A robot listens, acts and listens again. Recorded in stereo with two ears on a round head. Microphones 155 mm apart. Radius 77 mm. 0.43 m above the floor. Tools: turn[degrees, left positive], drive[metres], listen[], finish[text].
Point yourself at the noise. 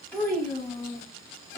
Thought: The child speaking: about 15° left or 165° left.
Action: turn[15]
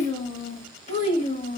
Thought: So it is at 135° left.
Action: turn[135]
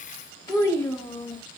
Thought: The child speaking is now 10° left.
Action: turn[10]
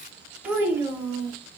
Thought: The child speaking is now 20° right.
Action: turn[-20]
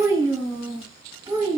Thought: The child speaking is now 15° right.
Action: turn[-15]
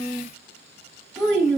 Action: finish[Facing the child speaking, 1 to 2 m away.]